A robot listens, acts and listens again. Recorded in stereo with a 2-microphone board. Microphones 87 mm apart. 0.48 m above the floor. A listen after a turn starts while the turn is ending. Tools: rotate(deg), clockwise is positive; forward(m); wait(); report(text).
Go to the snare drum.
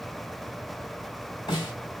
rotate(-60)
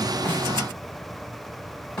rotate(-15)
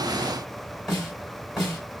forward(1.0)
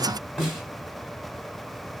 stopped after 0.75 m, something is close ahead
report("I am next to the snare drum.")